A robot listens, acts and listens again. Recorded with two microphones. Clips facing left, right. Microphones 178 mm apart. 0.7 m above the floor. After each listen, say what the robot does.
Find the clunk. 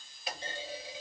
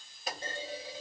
Turn 40° right.
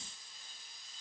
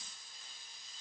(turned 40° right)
Keep listening.
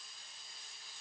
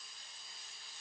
I heard a clunk, but can't make it out now. It was about straight ahead or 100° right.